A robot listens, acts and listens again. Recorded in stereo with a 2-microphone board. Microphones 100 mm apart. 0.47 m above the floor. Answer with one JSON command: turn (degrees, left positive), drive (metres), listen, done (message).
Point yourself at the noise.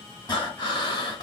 {"turn": 45}
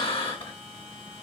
{"turn": 90}
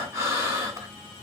{"turn": -30}
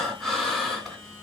{"done": "Facing the breathing, 2 to 4 m away."}